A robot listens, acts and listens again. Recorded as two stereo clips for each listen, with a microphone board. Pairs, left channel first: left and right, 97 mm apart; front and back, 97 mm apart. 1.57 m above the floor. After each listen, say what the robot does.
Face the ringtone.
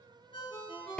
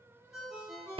Turn 95° left.
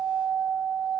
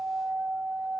Keep listening.
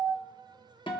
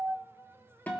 Keep listening.
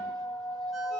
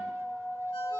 I heard a ringtone from this way, but can't make it out now.